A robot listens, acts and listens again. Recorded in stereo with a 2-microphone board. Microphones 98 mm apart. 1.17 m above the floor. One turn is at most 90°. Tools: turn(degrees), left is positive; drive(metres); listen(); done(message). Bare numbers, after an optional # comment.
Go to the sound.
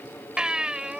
turn(-30)
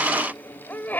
# So it is at 20° left.
turn(20)
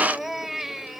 drive(1.0)
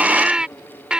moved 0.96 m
# The baby crying is now 10° right.
turn(-10)
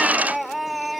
drive(1.0)
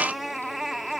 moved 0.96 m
drive(1.0)
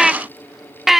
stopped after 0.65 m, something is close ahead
done("I am next to the baby crying.")